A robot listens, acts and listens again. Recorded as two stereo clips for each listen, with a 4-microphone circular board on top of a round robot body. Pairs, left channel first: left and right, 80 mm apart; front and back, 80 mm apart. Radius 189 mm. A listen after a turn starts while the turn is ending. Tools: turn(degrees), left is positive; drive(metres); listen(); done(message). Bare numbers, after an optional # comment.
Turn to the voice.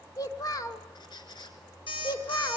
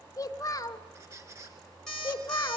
# The child speaking: 50° left.
turn(50)
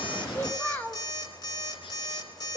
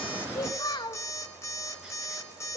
# The child speaking is now 25° left.
turn(25)
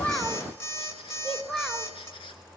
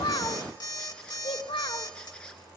done("Found it: a child speaking, straight ahead.")